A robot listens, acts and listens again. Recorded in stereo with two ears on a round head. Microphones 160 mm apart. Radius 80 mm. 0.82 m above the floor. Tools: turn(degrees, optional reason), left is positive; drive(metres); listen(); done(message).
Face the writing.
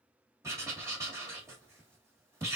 turn(degrees=-15, reason="The writing: about 15° right or 165° right.")
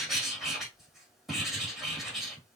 done("Facing the writing.")